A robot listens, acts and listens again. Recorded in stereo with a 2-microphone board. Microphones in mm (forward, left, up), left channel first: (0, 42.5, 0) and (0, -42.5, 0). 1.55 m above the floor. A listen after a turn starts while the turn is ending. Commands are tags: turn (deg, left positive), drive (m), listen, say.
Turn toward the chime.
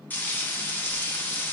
<listen/>
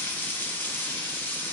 <listen/>
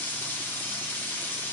<say>I can't make out a chime, only frying.</say>